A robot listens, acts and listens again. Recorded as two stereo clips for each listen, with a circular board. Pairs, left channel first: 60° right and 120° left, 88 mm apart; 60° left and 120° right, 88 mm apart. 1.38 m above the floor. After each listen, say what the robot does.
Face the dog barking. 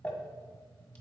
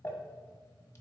Keep listening.
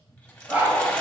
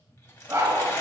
Turn 175° right.
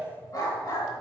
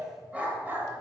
Turn 65° right.
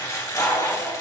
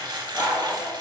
Turn 25° right.
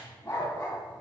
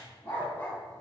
Found it: a dog barking, straight ahead.